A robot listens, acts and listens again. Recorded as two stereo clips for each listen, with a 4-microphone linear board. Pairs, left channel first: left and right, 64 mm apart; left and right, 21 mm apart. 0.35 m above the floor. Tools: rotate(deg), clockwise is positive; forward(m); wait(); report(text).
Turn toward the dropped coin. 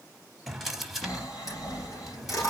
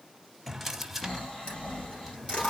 rotate(-60)
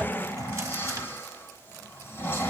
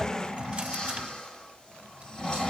wait()
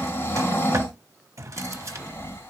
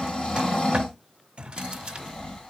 report("I heard a dropped coin, but can't make it out now. It was about straight ahead or 60° left.")